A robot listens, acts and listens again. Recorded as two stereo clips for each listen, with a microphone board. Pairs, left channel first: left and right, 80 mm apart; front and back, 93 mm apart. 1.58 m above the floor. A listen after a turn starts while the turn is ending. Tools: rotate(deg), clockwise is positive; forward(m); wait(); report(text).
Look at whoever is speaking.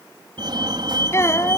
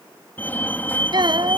rotate(-145)
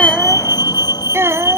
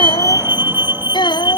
rotate(30)
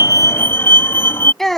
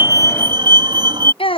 report("Facing the child speaking.")